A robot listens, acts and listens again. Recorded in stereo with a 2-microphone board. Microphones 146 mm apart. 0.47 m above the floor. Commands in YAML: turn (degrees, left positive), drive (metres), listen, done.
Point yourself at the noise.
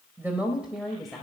turn: 30
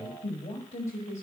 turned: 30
turn: 125
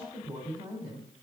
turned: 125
turn: -20
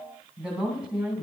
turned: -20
turn: -10
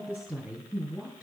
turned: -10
done: "Found it: a woman speaking, straight ahead."